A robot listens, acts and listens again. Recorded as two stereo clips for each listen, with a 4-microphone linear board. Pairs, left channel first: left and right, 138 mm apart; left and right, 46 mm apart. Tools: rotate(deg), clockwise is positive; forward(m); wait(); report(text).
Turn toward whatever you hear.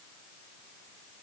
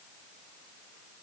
wait()
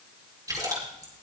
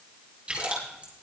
rotate(25)
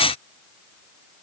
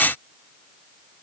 wait()
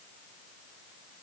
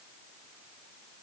report("I heard a splash, but can't make it out now. It was about straight ahead or 130° right.")